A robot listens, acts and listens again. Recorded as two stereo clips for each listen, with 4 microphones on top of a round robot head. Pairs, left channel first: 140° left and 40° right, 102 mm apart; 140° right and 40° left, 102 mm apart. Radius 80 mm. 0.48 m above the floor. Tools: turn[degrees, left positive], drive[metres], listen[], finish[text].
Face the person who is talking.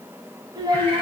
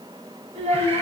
Thought: The child speaking: 15° left.
Action: turn[15]
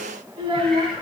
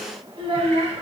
Action: finish[Found it: a child speaking, straight ahead.]